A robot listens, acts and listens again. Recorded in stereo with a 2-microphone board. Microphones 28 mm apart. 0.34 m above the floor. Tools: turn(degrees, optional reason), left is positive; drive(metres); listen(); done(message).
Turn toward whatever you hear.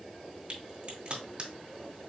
turn(degrees=-40, reason="The crack: about 40° right or 140° right.")
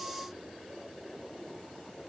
listen()
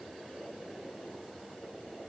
done("I heard a crack, but can't make it out now. It was about straight ahead or 100° right.")